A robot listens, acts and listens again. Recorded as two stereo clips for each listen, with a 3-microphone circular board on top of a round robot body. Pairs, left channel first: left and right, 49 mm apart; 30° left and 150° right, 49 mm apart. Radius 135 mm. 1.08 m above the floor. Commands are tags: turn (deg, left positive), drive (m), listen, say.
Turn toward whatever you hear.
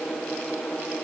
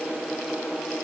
<listen/>
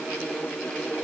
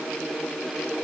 <listen/>
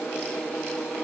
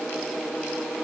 <say>I can't make out anything to turn to.</say>